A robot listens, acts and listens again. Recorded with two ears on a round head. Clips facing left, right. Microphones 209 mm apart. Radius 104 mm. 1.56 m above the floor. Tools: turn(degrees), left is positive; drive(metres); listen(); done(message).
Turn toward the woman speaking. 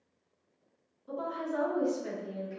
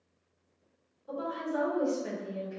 turn(degrees=30)
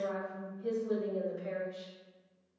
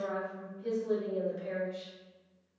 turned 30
done("Found it: a woman speaking, straight ahead, 2 to 4 m away.")